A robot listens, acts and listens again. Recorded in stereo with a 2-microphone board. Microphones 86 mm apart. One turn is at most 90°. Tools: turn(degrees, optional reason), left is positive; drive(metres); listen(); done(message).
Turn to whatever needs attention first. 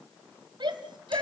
turn(degrees=-60, reason="The shout: about 60° right or 120° right.")
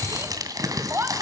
turn(degrees=-35, reason="So it is at 35° right.")
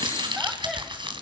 listen()
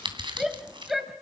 done("Found it: a shout, straight ahead, 2 to 4 m away.")